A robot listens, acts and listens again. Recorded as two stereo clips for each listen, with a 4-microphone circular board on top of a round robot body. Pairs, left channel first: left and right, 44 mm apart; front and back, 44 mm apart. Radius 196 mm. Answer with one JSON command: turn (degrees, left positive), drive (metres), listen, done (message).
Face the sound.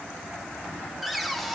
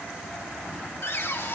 {"done": "Found it: a cupboard door, straight ahead, 2 to 4 m away."}